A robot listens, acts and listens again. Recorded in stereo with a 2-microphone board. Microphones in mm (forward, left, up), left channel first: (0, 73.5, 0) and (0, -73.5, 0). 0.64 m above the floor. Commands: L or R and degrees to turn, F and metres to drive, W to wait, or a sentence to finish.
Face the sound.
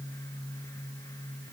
W
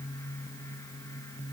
W
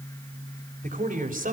R65
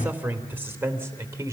R20
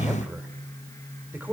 R10
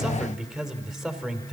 Found it: a man speaking, straight ahead.